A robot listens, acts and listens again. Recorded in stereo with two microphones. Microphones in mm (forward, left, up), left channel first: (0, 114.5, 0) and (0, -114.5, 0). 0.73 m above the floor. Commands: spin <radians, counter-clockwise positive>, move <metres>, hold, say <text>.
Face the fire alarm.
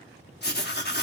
hold
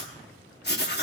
hold
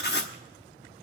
say I can't make out a fire alarm to turn to.